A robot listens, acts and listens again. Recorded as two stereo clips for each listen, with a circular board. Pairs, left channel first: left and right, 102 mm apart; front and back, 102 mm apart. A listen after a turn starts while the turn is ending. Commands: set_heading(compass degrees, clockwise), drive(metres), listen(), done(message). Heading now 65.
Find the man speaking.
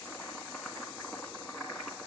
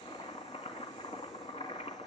listen()
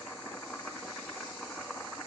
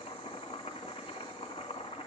listen()
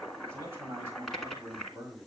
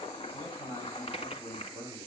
set_heading(90)
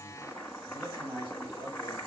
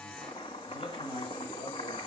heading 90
set_heading(110)
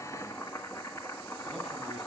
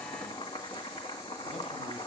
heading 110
listen()
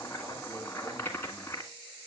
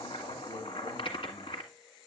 listen()
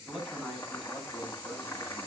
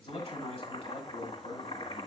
done("Facing the man speaking.")